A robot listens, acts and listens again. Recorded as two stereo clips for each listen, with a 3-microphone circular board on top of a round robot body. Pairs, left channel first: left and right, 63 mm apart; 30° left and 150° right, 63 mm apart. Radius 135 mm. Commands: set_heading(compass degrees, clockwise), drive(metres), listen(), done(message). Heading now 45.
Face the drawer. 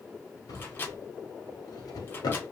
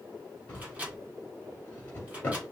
set_heading(305)
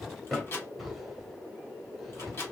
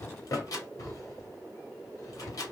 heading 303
done("Facing the drawer, 1 to 2 m away.")